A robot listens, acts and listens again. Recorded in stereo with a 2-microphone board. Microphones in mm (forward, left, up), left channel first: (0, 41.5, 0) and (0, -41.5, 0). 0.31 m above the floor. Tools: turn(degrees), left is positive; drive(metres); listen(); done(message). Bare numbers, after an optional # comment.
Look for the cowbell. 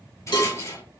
# The cowbell: about 60° left or 120° left.
turn(60)
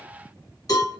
# So it is at 50° left.
turn(50)
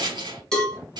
# The cowbell is now 10° left.
turn(10)
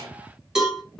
done("Facing the cowbell.")